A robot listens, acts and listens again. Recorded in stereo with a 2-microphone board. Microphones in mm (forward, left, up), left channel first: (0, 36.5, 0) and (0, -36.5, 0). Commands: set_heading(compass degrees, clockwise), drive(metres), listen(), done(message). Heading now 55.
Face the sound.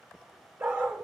set_heading(85)
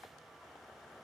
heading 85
listen()
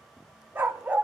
set_heading(105)
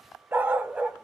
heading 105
set_heading(125)
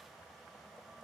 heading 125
listen()
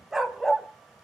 set_heading(95)
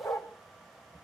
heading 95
set_heading(310)
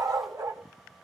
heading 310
set_heading(0)
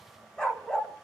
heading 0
set_heading(345)
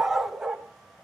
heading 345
done("Found it: a dog barking, straight ahead, 1 to 2 m away.")